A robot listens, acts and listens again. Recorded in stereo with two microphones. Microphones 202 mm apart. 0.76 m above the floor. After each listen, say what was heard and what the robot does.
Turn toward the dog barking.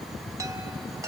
Keep listening.
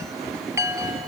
Keep listening.
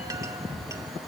I can't make out a dog barking, only a chime.